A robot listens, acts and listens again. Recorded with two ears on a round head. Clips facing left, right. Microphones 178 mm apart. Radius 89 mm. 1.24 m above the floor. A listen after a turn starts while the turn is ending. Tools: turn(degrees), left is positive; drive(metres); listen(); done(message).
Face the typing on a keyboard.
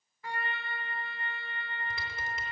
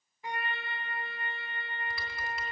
turn(degrees=25)
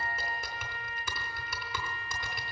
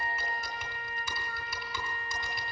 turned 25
turn(degrees=130)
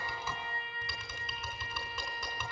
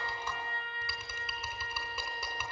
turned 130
turn(degrees=-10)
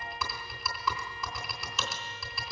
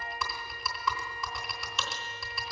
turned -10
done("Facing the typing on a keyboard.")